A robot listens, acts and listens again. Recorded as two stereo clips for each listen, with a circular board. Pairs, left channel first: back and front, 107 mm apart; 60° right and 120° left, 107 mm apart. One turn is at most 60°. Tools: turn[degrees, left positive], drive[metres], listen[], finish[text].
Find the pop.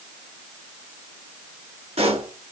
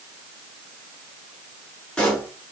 Thought: The pop: 25° left.
Action: turn[25]
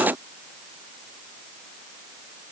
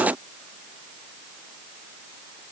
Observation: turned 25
Action: finish[I heard a pop from this way, but can't make it out now.]